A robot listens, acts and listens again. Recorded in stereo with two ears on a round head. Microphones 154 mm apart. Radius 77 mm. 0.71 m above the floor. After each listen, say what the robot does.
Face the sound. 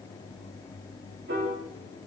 Turn 75° right.
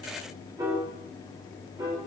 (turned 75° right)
Turn 20° right.
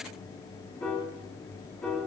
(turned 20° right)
Found it: a piano, straight ahead.